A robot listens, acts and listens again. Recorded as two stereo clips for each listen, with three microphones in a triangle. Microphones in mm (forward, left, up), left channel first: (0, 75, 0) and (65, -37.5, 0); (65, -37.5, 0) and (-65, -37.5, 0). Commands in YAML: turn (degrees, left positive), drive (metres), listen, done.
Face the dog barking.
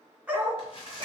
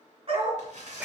turn: -130
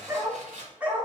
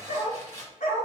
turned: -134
turn: 20
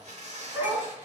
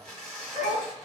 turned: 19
turn: 15
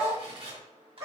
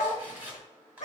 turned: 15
turn: 10
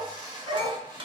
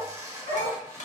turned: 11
done: "Found it: a dog barking, straight ahead."